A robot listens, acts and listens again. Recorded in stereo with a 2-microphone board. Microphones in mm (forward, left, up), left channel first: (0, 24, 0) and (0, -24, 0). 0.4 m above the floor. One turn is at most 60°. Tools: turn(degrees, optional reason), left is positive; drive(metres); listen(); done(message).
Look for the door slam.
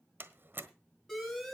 turn(degrees=-45, reason="The door slam: about 45° right or 135° right.")
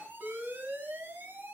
listen()
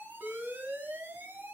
done("I heard a door slam, but can't make it out now. It was about straight ahead or 90° right.")